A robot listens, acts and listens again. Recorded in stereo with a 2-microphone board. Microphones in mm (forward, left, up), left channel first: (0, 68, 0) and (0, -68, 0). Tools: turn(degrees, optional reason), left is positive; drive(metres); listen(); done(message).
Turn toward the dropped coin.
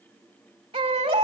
listen()
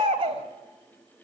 listen()
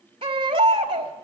done("I can't make out a dropped coin, only a baby crying.")